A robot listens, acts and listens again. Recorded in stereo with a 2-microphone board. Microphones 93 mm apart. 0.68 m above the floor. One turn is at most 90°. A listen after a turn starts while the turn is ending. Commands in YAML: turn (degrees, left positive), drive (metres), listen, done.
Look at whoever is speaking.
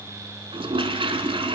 listen: true
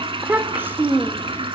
turn: -25
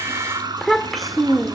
done: "Found it: a child speaking, straight ahead, 1 to 2 m away."